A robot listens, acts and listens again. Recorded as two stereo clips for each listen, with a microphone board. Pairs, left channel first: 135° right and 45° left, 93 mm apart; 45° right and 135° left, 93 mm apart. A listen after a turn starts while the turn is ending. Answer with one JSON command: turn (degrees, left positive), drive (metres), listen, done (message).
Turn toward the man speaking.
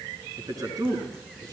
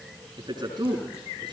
{"turn": 95}
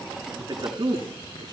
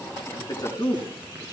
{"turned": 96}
{"done": "Facing the man speaking, over 4 m away."}